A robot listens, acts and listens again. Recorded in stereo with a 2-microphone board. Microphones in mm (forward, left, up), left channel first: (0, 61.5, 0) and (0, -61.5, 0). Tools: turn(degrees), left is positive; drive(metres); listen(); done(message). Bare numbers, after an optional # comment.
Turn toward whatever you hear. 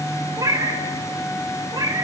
# The cat meowing: about 35° right or 145° right.
turn(-35)
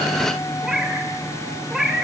done("Facing the cat meowing, 1 to 2 m away.")